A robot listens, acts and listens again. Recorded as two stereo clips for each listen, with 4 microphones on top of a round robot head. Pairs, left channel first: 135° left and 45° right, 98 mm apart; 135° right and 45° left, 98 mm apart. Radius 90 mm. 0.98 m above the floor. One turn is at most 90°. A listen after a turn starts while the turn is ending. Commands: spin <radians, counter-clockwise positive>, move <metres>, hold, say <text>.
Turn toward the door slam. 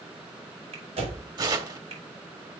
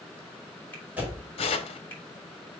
spin -0.52
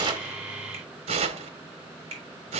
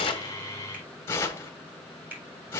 say I heard a door slam from this way, but can't make it out now.